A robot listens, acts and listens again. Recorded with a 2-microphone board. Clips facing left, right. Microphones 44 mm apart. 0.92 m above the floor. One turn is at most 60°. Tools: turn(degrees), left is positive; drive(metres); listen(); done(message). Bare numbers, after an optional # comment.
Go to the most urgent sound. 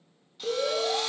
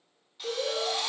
# The alarm: about 35° left or 145° left.
turn(35)
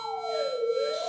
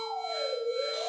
drive(1.0)
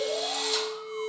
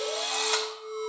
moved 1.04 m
# The alarm is now 20° left.
turn(20)
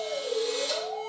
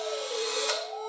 drive(1.0)
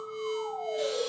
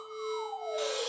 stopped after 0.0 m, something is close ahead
done("Arrived at the alarm, straight ahead.")